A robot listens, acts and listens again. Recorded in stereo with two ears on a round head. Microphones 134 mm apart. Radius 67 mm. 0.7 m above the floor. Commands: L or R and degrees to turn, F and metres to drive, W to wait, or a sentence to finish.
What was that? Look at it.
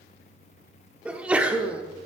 R30
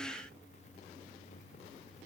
W
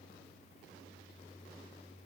I heard a sneeze, but can't make it out now. It was about 20° left or 140° right.